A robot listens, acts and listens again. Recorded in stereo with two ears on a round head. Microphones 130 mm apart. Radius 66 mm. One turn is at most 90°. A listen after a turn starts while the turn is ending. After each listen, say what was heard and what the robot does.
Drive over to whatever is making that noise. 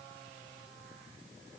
Keep listening.
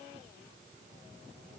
Keep listening.
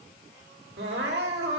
Turn 90° right.
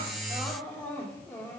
So it is at 15° left. Turn 15° left.
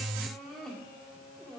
Drive 1.0 m forward.
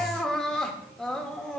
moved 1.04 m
Drive 1.0 m forward.
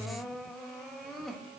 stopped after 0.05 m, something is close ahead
I am next to the crying.